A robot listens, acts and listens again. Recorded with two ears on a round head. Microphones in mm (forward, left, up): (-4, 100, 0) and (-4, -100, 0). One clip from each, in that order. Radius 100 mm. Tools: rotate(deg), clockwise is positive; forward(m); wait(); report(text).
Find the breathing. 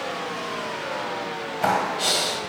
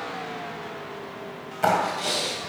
rotate(-40)
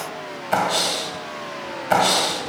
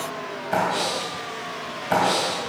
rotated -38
rotate(-100)
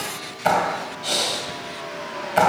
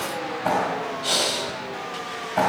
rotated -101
report("Found it: breathing, straight ahead, 2 to 4 m away.")